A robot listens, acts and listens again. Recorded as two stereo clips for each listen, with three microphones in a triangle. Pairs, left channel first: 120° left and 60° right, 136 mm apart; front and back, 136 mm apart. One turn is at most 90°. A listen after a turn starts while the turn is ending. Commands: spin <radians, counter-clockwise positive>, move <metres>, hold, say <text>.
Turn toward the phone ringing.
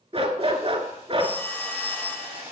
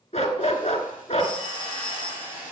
spin -1.57
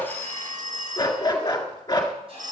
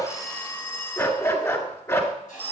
spin -1.31
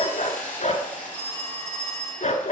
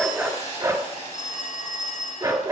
spin -0.35
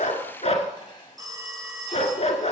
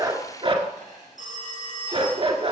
say Facing the phone ringing, 1 to 2 m away.